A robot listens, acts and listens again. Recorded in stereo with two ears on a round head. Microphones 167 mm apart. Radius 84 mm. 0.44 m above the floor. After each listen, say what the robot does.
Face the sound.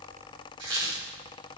Turn 70° right.
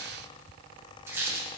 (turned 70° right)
Turn 15° right.
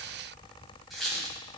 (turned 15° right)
Found it: a squeak, straight ahead, 2 to 4 m away.